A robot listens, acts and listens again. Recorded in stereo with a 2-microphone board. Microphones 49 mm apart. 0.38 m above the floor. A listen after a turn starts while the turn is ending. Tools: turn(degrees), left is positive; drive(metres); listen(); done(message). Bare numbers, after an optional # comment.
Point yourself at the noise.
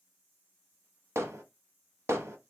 # The hammering: about 60° right or 120° right.
turn(-60)
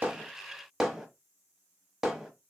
done("Facing the hammering, under 1 m away.")